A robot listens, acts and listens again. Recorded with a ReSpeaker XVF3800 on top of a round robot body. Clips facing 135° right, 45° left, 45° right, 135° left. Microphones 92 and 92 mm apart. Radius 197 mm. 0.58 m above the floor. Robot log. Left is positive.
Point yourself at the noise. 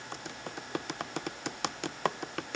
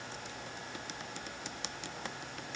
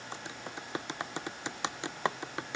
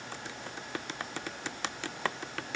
note: The typing on a keyboard: 115° right.
cmd yaw -115
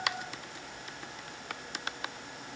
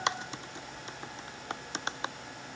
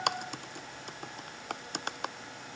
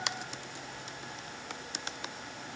note: The typing on a keyboard is now 15° right.
cmd yaw -15
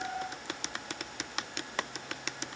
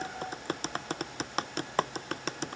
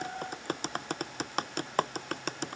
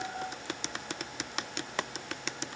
end: Facing the typing on a keyboard.